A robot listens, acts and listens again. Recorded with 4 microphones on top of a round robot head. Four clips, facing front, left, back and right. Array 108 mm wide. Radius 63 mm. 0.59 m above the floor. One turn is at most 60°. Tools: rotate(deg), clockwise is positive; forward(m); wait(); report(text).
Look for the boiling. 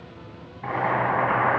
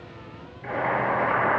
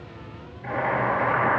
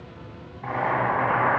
rotate(35)
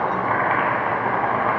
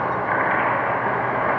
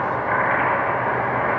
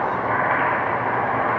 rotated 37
report("Facing the boiling, 2 to 4 m away.")